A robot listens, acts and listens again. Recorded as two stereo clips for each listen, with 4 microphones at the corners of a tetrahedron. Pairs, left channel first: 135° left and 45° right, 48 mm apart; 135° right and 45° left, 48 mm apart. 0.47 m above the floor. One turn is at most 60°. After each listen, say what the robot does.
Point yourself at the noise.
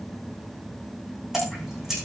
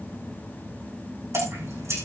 Turn 35° left.
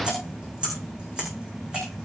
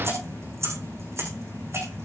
Turn 25° left.
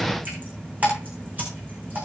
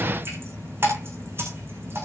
Turn 10° left.
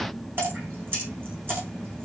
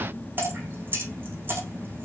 Found it: dripping, straight ahead, over 4 m away.